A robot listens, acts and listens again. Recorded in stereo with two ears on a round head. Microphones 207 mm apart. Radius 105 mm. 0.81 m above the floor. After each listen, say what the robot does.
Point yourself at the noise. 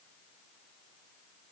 Keep listening.
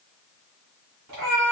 Turn 90° right.
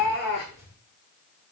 Turn 15° left.
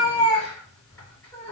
Turn 10° left.
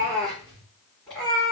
Facing the cat meowing, over 4 m away.